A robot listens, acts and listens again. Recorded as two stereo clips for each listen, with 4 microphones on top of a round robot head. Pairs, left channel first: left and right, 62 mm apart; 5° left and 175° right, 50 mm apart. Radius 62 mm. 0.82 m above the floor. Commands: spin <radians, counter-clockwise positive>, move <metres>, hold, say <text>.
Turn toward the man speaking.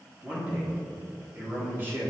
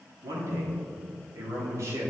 spin -2.62
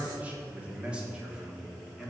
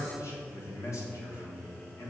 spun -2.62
say Found it: a man speaking, straight ahead, 1 to 2 m away.